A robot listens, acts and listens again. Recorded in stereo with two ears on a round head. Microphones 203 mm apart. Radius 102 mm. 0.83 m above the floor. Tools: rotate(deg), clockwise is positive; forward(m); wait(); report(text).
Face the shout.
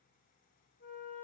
wait()
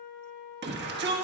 rotate(50)
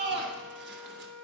rotate(65)
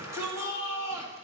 rotate(15)
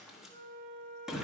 report("Found it: a shout, straight ahead, 1 to 2 m away.")